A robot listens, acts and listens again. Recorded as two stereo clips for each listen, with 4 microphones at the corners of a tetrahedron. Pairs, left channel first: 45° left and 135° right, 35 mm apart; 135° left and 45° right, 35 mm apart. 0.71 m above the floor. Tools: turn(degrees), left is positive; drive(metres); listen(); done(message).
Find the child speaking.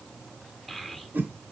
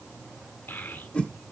turn(degrees=130)
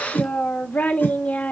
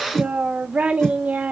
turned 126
done("Facing the child speaking, 1 to 2 m away.")